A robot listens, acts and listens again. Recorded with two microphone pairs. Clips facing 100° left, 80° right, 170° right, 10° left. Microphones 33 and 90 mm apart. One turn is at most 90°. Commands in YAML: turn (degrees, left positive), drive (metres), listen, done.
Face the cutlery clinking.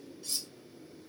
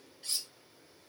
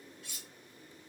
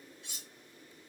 turn: -55
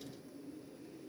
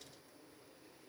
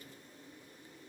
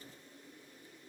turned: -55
listen: true
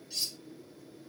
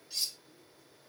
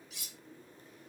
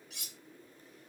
done: "Found it: cutlery clinking, straight ahead, under 1 m away."